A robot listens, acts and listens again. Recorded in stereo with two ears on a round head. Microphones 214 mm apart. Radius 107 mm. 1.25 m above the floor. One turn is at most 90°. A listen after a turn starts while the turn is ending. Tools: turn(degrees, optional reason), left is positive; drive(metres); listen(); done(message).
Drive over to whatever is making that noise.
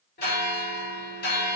turn(degrees=45, reason="The bell: about 45° left or 135° left.")
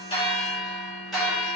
drive(metres=1.0)
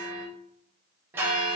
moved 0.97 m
turn(degrees=-10, reason="The bell is now 10° right.")
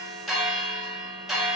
drive(metres=1.0)
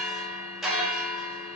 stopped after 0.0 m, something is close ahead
done("Arrived at the bell, straight ahead.")